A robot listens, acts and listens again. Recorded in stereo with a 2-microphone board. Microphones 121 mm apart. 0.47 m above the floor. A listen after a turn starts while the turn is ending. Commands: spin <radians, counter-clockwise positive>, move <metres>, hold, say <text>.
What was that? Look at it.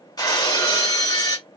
spin 0.61
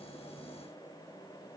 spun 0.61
hold
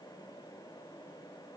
say I heard breaking glass, but can't make it out now. It was about straight ahead or 110° left.